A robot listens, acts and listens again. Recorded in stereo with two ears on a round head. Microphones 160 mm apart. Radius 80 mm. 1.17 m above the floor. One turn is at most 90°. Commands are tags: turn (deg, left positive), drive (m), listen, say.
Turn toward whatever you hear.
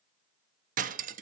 <turn deg="-45"/>
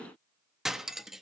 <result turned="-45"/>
<say>Facing the cutlery clinking.</say>